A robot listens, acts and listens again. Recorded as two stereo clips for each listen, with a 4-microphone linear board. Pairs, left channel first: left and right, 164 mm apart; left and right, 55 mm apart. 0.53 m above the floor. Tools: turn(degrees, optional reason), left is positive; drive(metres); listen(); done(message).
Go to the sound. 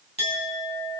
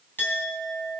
turn(degrees=35, reason="The clink: about 35° left or 145° left.")
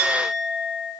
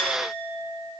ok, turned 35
turn(degrees=105, reason="So it is at 105° left.")
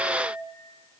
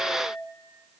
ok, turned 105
turn(degrees=35, reason="The clink is now 35° left.")
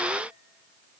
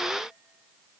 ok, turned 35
listen()
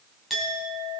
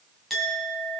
drive(metres=1.0)
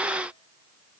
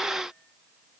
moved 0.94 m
listen()
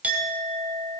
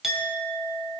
turn(degrees=-10, reason="The clink is now 10° right.")
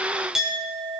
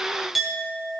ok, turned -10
drive(metres=1.0)
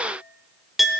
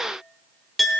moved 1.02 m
drive(metres=1.0)
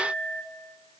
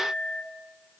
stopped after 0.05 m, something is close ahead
done("I am next to the clink.")